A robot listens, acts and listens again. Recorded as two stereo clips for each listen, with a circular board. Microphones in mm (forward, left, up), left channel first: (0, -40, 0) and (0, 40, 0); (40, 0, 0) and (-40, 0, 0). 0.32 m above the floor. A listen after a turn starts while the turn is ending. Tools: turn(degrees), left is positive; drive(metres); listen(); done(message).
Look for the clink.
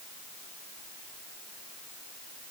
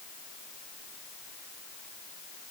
listen()
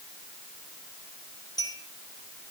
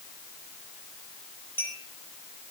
turn(degrees=-60)
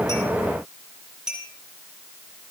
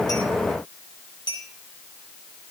turn(degrees=10)
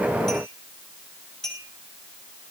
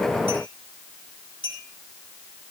done("Found it: a clink, straight ahead, 2 to 4 m away.")